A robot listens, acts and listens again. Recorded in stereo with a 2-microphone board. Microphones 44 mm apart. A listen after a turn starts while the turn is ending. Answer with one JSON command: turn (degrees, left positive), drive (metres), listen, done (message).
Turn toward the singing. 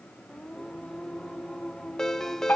{"turn": 30}
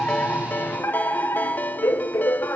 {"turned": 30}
{"listen": true}
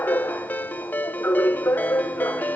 {"listen": true}
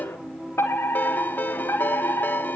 {"turn": -20}
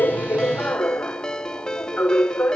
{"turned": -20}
{"listen": true}
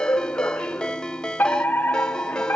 {"listen": true}
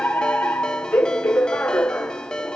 {"done": "Facing where the singing came from. I can't hear it now."}